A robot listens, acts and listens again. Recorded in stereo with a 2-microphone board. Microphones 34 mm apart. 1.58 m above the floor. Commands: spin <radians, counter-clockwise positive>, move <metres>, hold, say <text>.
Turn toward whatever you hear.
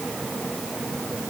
hold
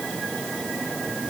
hold
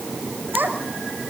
spin -1.57
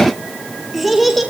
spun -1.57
say Facing the child speaking.